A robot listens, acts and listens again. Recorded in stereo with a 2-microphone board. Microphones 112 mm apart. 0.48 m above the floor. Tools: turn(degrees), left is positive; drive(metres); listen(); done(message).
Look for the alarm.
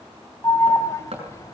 turn(degrees=30)
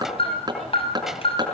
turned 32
turn(degrees=115)
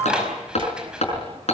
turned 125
turn(degrees=-10)
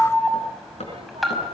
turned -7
done("Facing the alarm, over 4 m away.")